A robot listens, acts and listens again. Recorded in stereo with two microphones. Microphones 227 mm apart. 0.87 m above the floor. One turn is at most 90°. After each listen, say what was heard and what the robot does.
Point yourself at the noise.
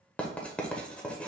Turn 30° left.
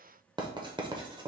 So it is at 25° right. Turn 25° right.
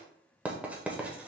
The writing is now 10° right. Turn 10° right.
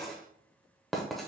Found it: writing, straight ahead, under 1 m away.